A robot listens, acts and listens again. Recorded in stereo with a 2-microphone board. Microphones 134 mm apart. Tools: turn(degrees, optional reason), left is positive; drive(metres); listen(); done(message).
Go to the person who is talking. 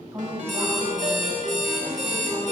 turn(degrees=-20, reason="The woman speaking: about 20° right or 160° right.")
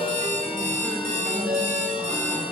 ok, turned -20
listen()
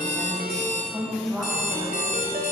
drive(metres=1.0)
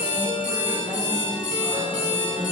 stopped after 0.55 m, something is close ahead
listen()
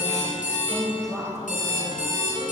done("Something is in my way. I am facing the woman speaking but have not reached it.")